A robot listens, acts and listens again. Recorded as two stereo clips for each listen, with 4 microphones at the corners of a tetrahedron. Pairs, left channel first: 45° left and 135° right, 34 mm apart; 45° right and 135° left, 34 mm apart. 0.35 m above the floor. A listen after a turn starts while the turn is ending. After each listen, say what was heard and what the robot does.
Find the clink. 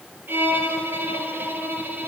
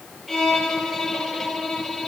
Keep listening.
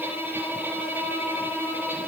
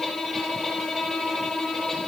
Keep listening.
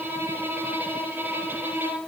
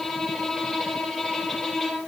I can't make out a clink to turn to.